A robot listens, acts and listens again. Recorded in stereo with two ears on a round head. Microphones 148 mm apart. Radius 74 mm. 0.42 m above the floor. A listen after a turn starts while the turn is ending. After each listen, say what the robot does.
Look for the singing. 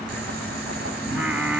Turn 30° right.
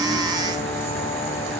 Keep listening.
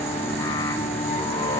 Turn 20° left.
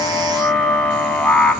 Facing the singing.